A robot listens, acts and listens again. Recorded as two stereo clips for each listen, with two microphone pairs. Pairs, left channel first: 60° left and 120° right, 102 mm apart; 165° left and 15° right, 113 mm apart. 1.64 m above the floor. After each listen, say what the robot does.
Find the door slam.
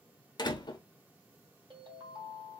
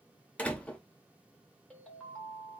Turn 90° left.
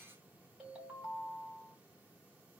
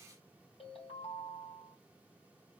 I heard a door slam from this way, but can't make it out now.